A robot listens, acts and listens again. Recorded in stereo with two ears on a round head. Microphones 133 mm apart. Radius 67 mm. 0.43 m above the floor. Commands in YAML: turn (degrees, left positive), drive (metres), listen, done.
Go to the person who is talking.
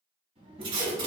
turn: -40
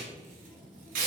drive: 1.0
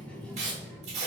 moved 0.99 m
turn: 10
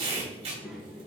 drive: 1.0
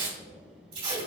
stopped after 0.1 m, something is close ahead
done: "Arrived at the child speaking, straight ahead."